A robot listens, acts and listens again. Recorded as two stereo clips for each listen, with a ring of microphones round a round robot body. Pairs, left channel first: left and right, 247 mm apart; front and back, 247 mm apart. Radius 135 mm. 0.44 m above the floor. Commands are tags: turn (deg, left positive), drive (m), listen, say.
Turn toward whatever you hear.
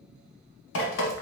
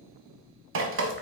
<turn deg="140"/>
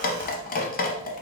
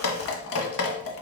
<turn deg="35"/>
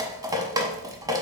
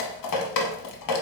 <turn deg="-15"/>
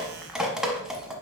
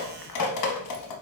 <say>Facing the dripping.</say>